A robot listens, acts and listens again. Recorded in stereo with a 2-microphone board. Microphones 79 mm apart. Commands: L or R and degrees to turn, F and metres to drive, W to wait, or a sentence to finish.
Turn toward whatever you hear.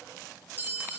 R25
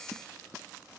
W
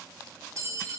R125
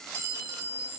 R50
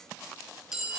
R10
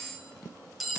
Facing the clink.